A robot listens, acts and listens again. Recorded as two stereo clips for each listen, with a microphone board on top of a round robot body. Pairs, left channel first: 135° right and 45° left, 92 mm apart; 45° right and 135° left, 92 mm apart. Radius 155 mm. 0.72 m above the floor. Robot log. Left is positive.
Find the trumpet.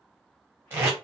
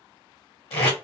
cmd idle
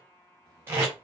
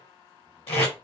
cmd idle
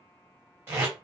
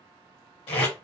end: I can't make out a trumpet to turn to.